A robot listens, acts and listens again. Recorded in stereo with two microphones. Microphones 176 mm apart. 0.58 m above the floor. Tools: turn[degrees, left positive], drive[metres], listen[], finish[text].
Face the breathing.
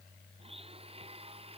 Action: listen[]
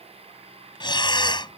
Thought: The breathing: about 25° left or 155° left.
Action: turn[25]
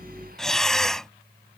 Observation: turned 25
Action: finish[Found it: breathing, straight ahead.]